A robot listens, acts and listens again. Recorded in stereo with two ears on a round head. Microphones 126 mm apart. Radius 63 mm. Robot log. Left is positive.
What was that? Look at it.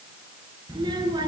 note: The child speaking: about 30° right or 150° right.
cmd yaw -30
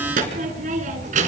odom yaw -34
note: So it is at 120° right.
cmd yaw -120
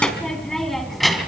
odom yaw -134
end: Facing the child speaking, 2 to 4 m away.